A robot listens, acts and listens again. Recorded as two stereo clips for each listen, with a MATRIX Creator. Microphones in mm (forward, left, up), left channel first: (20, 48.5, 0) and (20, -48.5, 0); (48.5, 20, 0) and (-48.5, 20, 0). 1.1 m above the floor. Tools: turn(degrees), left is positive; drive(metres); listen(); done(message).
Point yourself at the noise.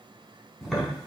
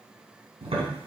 turn(degrees=180)
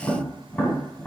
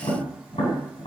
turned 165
turn(degrees=15)
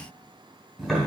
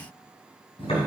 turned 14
done("Facing the tapping, 2 to 4 m away.")